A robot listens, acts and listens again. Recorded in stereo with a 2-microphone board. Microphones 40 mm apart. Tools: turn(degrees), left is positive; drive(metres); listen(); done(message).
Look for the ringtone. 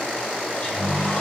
turn(degrees=-75)
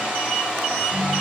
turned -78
turn(degrees=-25)
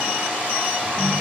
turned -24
done("Found it: a ringtone, straight ahead.")